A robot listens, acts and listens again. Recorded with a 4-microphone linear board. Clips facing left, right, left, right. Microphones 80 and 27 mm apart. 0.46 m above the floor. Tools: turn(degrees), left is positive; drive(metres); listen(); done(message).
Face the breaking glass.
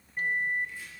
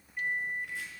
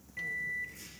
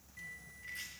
listen()
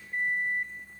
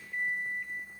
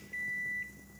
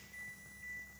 listen()
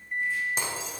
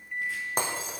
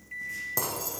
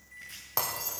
turn(degrees=-50)
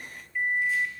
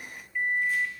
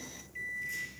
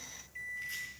listen()
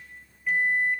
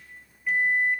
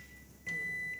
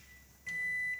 done("I heard breaking glass, but can't make it out now. It was about straight ahead or 80° right.")